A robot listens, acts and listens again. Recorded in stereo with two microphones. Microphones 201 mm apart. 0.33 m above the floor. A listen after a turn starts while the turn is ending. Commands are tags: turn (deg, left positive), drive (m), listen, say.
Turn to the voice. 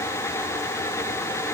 <listen/>
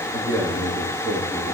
<turn deg="-70"/>
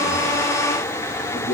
<turn deg="-35"/>
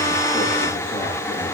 <listen/>
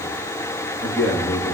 <say>Found it: a man speaking, straight ahead, over 4 m away.</say>